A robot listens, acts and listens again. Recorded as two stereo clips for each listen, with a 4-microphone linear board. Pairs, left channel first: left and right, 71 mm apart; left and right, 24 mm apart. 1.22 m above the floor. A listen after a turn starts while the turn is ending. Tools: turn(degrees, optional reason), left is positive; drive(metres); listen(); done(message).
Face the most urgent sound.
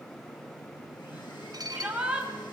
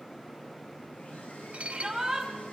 turn(degrees=-15, reason="The shout: about 15° right or 165° right.")
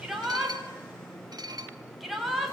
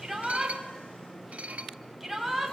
done("Found it: a shout, straight ahead, over 4 m away.")